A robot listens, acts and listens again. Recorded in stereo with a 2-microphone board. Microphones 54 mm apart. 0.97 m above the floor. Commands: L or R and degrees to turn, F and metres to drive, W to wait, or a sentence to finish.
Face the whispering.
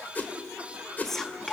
L30
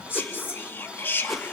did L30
L140
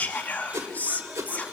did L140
L30
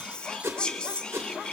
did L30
L15
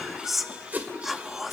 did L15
Facing the whispering, 1 to 2 m away.